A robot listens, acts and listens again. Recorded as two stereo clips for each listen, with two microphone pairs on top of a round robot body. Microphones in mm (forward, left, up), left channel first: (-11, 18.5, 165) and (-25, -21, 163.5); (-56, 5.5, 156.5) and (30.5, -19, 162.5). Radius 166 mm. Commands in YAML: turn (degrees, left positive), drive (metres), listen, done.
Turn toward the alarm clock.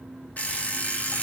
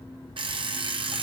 turn: 15
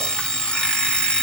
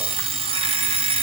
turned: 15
done: "Facing the alarm clock."